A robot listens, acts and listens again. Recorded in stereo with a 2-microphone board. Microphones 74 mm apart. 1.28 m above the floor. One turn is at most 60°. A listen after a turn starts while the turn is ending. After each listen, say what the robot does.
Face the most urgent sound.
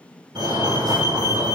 Turn 60° right.
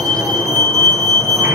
Turn 40° right.
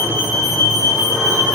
Found it: a fire alarm, straight ahead.